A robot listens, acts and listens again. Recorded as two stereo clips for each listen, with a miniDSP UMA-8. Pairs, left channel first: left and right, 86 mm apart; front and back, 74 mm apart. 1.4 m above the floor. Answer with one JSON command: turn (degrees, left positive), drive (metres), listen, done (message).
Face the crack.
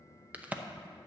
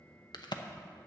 {"turn": -15}
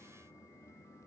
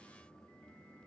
{"done": "I heard a crack from this way, but can't make it out now."}